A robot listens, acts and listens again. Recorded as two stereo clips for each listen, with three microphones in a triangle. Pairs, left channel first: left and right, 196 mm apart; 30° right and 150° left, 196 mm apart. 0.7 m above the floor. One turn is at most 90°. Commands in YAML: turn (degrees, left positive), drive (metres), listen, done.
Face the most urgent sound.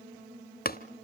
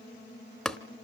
listen: true
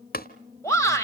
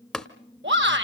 turn: 90
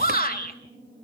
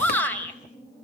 turn: 50
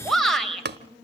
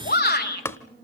done: "Found it: a shout, straight ahead."